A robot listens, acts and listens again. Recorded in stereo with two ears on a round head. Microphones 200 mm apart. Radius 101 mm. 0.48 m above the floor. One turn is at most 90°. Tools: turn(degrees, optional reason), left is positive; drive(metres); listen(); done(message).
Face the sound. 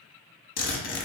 turn(degrees=35, reason="The zipper: about 35° left or 145° left.")
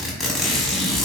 done("Found it: a zipper, straight ahead, under 1 m away.")